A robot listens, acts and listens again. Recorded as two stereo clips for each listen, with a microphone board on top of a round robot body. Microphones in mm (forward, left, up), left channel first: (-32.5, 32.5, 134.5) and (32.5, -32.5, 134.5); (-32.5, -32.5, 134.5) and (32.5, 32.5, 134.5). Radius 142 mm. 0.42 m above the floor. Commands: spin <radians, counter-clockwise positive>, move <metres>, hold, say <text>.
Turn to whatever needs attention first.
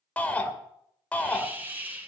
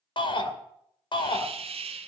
spin -2.62
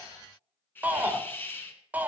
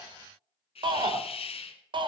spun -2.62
spin 0.44
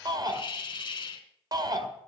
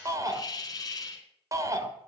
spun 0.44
say Found it: a shout, straight ahead, 2 to 4 m away.